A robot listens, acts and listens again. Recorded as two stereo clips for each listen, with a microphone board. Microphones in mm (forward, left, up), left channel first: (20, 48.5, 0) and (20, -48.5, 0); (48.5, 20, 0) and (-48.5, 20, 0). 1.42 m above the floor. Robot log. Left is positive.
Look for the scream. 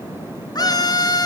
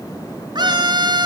note: The scream: 135° left.
cmd yaw +135
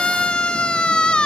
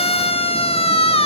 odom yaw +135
note: The scream is now 10° left.
cmd yaw +10
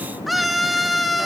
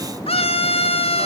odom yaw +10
end: Found it: a scream, straight ahead, 2 to 4 m away.